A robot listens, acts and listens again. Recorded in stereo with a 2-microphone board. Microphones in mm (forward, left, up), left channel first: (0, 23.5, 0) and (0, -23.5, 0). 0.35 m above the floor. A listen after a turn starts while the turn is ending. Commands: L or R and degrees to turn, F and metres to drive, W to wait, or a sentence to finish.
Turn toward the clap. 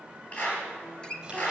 L35
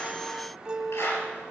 L110
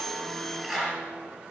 R15
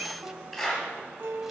Facing the clap, over 4 m away.